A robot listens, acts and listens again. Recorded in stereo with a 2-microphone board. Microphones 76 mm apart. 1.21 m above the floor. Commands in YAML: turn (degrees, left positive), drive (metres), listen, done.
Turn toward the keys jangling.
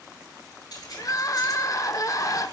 turn: 55
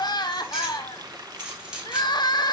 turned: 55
turn: -10
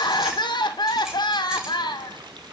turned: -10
listen: true
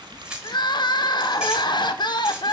turn: -10
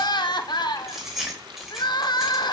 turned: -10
done: "Facing the keys jangling, 2 to 4 m away."